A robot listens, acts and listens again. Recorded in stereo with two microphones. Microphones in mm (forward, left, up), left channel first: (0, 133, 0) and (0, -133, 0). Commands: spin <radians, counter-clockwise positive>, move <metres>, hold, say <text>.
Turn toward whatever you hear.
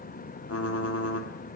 spin 1.05
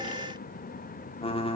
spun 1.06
spin 0.44
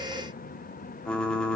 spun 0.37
say Found it: typing on a keyboard, straight ahead, under 1 m away.